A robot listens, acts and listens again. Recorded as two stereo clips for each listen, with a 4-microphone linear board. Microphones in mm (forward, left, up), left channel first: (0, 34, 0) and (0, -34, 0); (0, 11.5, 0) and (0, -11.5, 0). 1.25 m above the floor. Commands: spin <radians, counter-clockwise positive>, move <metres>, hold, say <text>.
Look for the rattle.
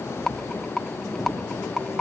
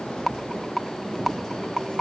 spin 0.52
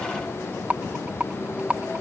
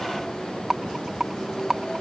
spin -0.44
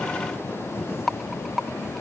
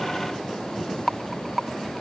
say Found it: a rattle, straight ahead.